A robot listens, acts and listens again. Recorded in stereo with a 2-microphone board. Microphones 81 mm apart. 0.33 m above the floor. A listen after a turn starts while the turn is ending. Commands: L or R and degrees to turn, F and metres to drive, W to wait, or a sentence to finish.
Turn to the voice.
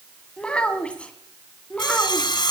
L15
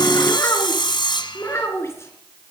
L35
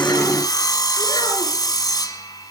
W
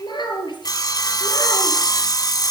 L115
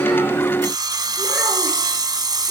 W
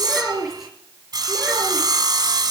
Found it: a child speaking, straight ahead.